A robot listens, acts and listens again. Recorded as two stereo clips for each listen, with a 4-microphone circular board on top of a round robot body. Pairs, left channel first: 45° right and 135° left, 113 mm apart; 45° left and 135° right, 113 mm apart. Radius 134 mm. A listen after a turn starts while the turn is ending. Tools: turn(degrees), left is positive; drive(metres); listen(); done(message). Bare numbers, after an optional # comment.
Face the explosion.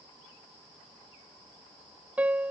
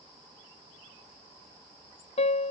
listen()
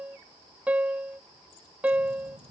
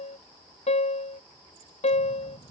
# The explosion: 100° left.
turn(100)
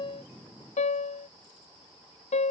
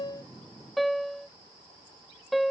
done("Facing where the explosion came from. I can't hear it now.")